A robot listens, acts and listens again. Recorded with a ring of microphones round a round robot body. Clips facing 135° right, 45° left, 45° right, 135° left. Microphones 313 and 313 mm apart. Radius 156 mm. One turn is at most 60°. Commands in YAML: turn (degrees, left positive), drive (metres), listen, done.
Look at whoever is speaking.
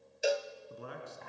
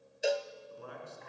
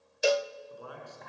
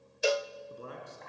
turn: -60
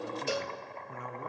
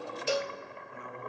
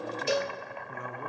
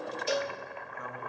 turn: -60
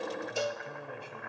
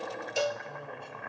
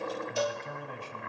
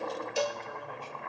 turn: -50
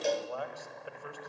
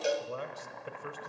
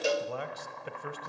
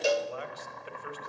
turn: -15
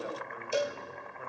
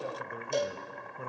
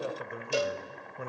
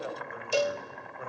done: "Found it: a man speaking, straight ahead."